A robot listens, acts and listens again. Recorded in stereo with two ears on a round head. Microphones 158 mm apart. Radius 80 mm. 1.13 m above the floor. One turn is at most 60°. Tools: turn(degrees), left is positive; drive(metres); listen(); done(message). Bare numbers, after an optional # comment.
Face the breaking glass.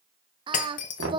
# The breaking glass: about 50° left or 130° left.
turn(50)
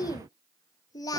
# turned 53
listen()
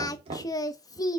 done("I heard breaking glass, but can't make it out now. It was about 5° right or 80° left.")